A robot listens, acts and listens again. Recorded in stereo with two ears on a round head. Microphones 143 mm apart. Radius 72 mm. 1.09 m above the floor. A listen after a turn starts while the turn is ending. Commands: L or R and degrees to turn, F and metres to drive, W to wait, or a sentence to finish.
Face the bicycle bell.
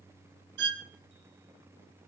W
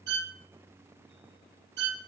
W
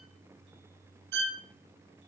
I can't make out a bicycle bell, only a violin.